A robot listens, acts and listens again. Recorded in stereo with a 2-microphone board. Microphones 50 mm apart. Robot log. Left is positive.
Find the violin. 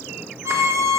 note: The violin: about 75° right or 105° right.
cmd yaw -75
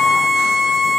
end: Facing the violin, under 1 m away.